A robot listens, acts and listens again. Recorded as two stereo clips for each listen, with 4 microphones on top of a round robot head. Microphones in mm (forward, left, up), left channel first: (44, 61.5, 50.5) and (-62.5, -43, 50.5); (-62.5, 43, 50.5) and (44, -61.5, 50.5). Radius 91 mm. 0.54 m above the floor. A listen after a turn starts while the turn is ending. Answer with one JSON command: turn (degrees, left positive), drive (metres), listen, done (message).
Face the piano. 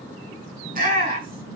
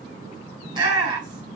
{"listen": true}
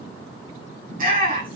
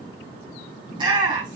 {"listen": true}
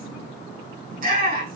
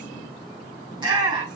{"done": "I can't make out a piano to turn to."}